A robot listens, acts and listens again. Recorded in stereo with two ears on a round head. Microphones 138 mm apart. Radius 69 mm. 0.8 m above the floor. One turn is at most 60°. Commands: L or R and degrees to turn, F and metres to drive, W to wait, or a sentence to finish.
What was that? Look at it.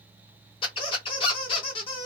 L35
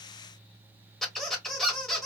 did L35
Found it: a squeak, straight ahead.